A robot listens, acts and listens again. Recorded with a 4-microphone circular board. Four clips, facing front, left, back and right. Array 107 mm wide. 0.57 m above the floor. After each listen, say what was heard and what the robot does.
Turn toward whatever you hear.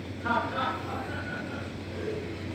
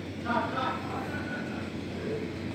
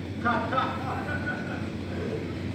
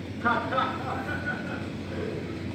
The laughter: 105° right. Turn 105° right.
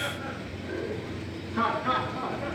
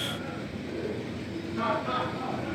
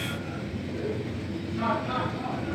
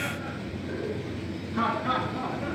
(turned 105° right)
The laughter is now 15° right. Turn 15° right.
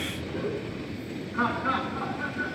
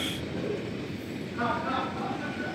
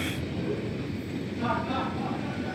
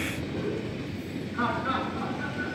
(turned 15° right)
Facing the laughter.